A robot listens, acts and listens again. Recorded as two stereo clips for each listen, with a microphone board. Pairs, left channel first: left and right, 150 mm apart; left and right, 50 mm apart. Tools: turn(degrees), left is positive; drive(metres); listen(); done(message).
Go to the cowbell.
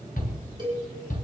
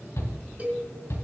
turn(degrees=-30)
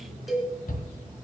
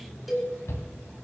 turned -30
drive(metres=1.0)
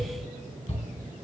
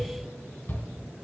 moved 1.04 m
listen()
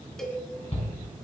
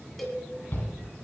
drive(metres=1.0)
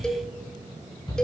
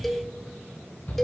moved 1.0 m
drive(metres=1.0)
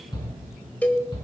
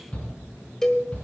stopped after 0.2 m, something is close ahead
turn(degrees=10)
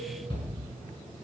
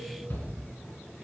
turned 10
listen()
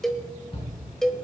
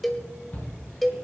done("I am next to the cowbell.")